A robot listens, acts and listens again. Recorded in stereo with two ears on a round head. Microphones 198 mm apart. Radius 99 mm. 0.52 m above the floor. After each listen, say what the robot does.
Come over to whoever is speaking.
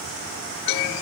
Keep listening.
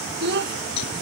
Turn 50° right.
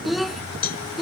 Drive 1.0 m forward.
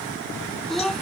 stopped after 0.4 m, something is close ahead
Something is in my way. I am facing the child speaking but have not reached it.